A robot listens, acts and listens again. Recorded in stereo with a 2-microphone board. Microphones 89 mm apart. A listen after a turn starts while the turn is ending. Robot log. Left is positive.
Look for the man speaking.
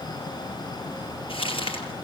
cmd idle
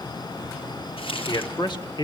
note: The man speaking: about 55° left or 125° left.
cmd yaw +55
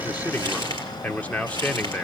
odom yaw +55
note: So it is at 15° left.
cmd yaw +15
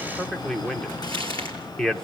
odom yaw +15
end: Found it: a man speaking, straight ahead.